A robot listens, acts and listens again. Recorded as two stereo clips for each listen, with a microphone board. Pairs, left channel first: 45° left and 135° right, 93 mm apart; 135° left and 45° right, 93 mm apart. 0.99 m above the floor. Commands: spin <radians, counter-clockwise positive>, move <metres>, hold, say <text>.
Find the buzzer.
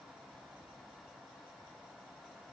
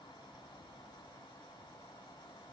hold
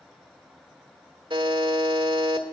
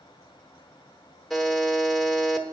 spin -2.36
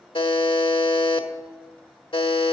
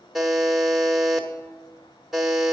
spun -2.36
spin 0.70
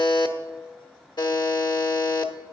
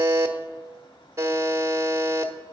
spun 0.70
spin 0.17
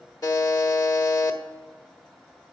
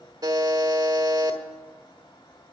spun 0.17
say Facing the buzzer.